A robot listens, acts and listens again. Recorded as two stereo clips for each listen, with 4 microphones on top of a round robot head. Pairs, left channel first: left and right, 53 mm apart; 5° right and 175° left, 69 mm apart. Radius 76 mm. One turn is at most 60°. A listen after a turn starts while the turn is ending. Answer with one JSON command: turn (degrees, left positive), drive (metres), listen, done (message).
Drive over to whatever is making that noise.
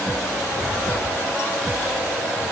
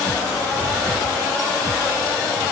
{"listen": true}
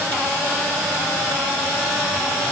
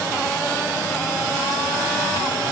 {"listen": true}
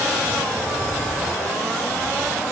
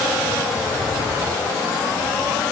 {"done": "I can't make out anything."}